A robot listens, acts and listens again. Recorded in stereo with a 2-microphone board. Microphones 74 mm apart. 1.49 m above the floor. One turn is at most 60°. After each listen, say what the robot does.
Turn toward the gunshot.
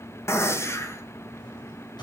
Turn 35° left.
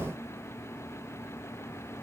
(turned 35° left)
Keep listening.
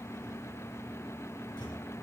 I heard a gunshot, but can't make it out now. It was about straight ahead or 110° left.